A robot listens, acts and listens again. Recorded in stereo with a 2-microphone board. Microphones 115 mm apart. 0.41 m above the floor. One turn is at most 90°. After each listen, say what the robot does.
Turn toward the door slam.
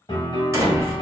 Turn 30° right.
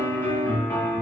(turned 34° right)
Keep listening.
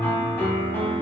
I heard a door slam, but can't make it out now. It was about 5° left or 120° right.